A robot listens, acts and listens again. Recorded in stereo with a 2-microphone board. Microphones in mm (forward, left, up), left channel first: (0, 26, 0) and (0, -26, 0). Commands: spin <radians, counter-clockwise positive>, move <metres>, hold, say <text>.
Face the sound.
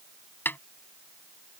spin 0.70
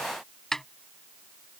spin 0.17
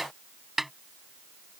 say Facing the snare drum.